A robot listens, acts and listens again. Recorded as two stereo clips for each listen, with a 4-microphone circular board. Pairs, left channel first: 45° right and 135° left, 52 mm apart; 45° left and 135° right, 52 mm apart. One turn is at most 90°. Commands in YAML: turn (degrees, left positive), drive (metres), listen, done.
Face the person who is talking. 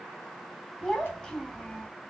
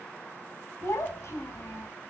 turn: 30
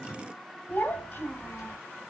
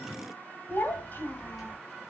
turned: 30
done: "Found it: a child speaking, straight ahead, 1 to 2 m away."